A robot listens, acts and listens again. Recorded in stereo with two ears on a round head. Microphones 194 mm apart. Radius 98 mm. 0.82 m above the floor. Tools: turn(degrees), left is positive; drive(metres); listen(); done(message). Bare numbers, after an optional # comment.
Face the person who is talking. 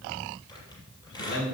# The man speaking: about 55° left or 125° left.
turn(55)
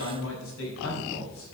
# So it is at 65° left.
turn(65)
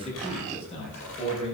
# The man speaking is now 30° left.
turn(30)
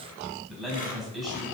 done("Found it: a man speaking, straight ahead, over 4 m away.")